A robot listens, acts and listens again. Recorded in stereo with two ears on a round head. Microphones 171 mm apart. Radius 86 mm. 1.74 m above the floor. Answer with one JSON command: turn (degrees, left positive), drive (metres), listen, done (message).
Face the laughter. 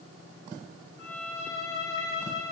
{"listen": true}
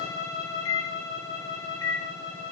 {"listen": true}
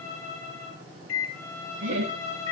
{"turn": -70}
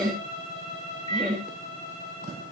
{"done": "Found it: laughter, straight ahead."}